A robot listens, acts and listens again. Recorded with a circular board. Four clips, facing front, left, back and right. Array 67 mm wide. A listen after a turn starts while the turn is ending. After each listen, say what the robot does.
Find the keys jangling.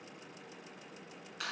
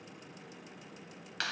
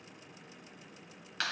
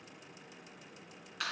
Keep listening.
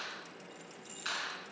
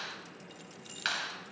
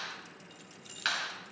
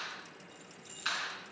Turn 125° left.
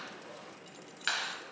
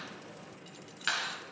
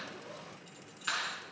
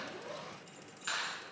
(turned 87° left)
Turn 35° left.
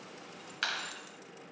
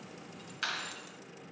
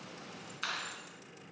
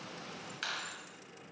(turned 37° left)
Keep listening.
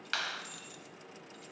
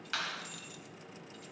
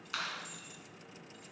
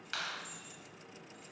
Turn 50° left.
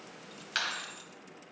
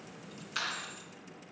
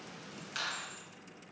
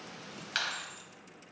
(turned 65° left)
Turn 15° right.
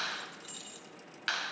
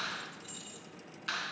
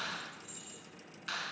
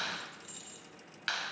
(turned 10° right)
Found it: keys jangling, straight ahead.